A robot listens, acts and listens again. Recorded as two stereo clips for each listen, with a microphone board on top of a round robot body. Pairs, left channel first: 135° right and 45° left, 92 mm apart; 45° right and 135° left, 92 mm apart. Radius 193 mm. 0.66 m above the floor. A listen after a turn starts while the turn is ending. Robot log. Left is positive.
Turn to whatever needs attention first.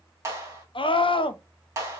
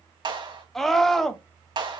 note: The scream: 130° right.
cmd yaw -130
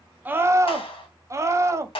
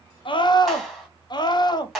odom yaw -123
note: The scream is now 10° right.
cmd yaw -10
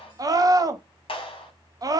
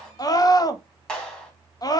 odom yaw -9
end: Facing the scream.